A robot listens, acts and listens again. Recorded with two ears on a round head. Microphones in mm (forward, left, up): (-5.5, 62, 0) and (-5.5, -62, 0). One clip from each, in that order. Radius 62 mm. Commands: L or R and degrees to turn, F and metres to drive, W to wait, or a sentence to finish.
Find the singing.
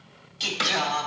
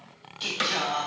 L40
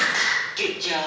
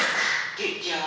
L110
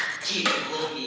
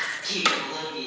L15
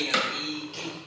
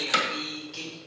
Facing the singing, 2 to 4 m away.